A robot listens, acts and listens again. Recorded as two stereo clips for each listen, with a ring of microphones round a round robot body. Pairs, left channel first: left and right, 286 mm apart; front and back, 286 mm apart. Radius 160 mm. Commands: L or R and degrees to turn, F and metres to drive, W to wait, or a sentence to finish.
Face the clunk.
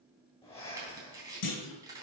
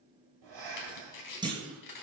L105
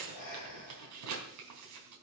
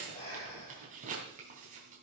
Facing where the clunk came from. I can't hear it now.